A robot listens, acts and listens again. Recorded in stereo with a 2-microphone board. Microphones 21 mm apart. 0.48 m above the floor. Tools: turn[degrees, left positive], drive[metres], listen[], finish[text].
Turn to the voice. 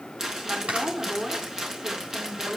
Thought: The woman speaking: about 60° right or 120° right.
Action: turn[-60]
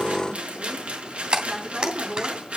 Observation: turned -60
Action: listen[]
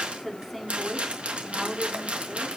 Action: finish[Facing the woman speaking.]